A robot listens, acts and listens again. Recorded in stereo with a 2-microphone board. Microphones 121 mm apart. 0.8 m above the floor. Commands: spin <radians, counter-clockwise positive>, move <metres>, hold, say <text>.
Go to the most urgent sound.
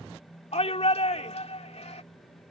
spin 1.22
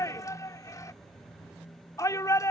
spin 0.52
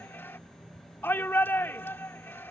spin 0.35
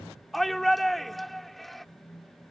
move 1.0
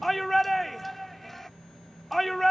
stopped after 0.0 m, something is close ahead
say Blocked. The shout is further on, straight ahead.